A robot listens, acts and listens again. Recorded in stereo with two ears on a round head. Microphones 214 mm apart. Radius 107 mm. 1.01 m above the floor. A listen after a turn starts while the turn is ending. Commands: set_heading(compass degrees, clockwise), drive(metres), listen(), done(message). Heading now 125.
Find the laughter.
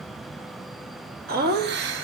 set_heading(175)
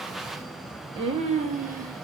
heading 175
set_heading(210)
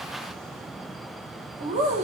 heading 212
set_heading(242)
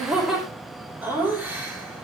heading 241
set_heading(251)
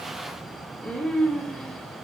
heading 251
done("Facing the laughter, 2 to 4 m away.")